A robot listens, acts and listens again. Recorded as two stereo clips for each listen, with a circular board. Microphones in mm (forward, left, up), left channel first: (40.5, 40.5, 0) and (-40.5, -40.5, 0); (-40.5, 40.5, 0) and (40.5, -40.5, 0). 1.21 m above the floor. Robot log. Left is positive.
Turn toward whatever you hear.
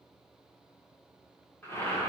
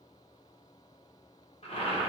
note: The boiling: 115° left.
cmd yaw +115
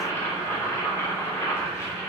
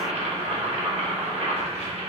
note: The boiling is now 20° right.
cmd yaw -20
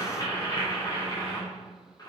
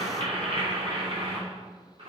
note: The boiling is now 10° right.
cmd yaw -10
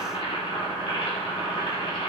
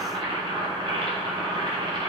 end: Facing the boiling.